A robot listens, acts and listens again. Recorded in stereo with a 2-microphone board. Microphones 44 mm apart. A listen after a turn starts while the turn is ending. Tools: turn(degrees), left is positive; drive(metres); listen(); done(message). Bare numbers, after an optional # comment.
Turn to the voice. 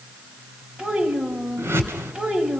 # The child speaking: about 15° right or 165° right.
turn(-15)
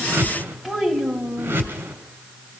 done("Facing the child speaking.")